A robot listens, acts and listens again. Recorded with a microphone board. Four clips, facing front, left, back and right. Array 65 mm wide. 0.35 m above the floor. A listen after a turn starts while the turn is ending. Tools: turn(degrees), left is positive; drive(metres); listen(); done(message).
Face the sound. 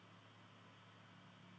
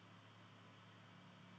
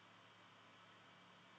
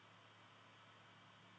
listen()
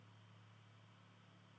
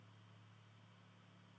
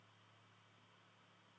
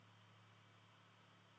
listen()
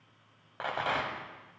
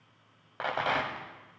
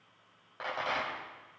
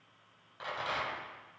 turn(degrees=70)
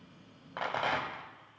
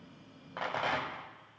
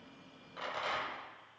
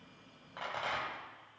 turn(degrees=25)
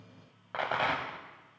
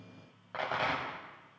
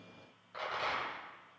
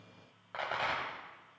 done("Found it: a rattle, straight ahead, 1 to 2 m away.")